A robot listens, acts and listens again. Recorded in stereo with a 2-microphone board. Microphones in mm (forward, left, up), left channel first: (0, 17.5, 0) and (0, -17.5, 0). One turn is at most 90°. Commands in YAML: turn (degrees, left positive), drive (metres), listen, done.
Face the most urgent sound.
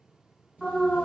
turn: -30
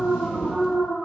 turn: -90
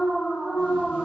turn: -60
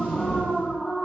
turn: -10
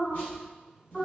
done: "Facing the alarm, 1 to 2 m away."